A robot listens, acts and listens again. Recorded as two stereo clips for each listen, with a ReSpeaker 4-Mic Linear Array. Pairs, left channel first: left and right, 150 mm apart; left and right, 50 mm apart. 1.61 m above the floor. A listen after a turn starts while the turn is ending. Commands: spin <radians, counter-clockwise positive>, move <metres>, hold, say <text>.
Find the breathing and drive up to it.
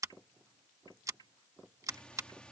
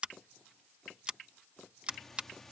spin 0.52
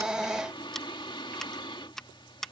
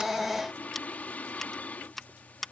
spin 2.53
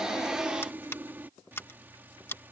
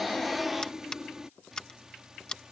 spin -0.26
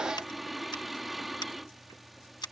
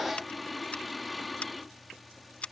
move 1.0
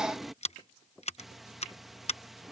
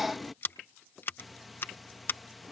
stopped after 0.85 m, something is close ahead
say I am next to the breathing.